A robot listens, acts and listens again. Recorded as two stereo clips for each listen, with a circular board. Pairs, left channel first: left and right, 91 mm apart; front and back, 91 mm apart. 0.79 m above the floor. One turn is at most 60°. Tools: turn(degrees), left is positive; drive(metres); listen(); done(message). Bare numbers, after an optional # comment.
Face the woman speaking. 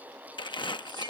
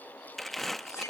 listen()
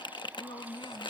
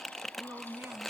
# The woman speaking: 115° left.
turn(60)
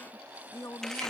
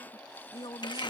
# The woman speaking is now 30° left.
turn(30)
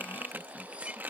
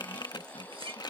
listen()
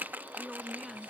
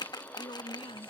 done("Found it: a woman speaking, straight ahead.")